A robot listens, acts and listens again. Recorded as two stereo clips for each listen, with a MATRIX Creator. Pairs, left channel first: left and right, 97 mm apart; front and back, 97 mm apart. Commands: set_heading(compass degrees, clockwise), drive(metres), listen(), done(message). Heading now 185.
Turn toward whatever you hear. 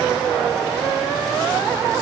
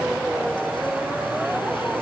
listen()
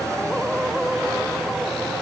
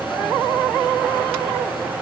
listen()
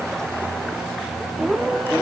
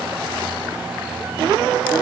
done("I can't make out anything to turn to.")